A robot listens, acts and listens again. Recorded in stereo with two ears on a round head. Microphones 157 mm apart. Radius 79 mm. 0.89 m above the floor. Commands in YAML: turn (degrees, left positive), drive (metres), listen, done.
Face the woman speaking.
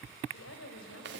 turn: 90
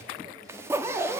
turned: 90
listen: true
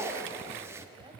turn: -25
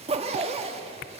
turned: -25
listen: true
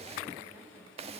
turn: -10
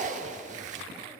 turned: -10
listen: true
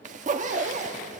listen: true
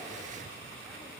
done: "I heard a woman speaking from this way, but can't make it out now."